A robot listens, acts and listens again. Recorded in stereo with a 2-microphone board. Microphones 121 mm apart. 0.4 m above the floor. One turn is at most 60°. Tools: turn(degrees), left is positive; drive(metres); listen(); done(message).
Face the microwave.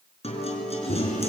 turn(degrees=60)
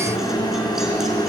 turn(degrees=35)
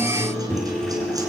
done("Facing the microwave.")